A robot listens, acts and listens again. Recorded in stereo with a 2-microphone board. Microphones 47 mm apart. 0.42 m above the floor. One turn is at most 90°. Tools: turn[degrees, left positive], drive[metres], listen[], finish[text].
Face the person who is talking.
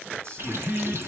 Thought: The man speaking: about 60° right or 120° right.
Action: turn[-60]
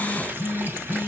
Action: listen[]
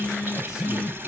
Action: listen[]
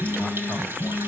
Action: finish[I heard a man speaking, but can't make it out now. It was about straight ahead or 60° right.]